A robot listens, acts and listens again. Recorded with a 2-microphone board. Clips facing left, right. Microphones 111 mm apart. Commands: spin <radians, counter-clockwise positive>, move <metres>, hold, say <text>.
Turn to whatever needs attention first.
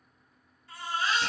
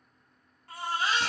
spin -1.05
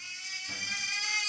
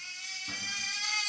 spin -0.35
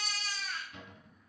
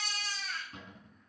say Found it: a baby crying, straight ahead, 1 to 2 m away.